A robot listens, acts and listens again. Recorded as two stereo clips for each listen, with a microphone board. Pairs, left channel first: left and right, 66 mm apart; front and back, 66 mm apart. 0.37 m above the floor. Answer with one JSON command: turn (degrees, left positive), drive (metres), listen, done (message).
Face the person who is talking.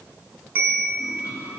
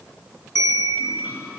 {"listen": true}
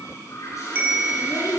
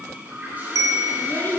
{"turn": 60}
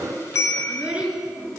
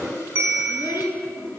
{"turn": -15}
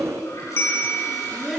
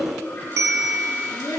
{"done": "Found it: a child speaking, straight ahead."}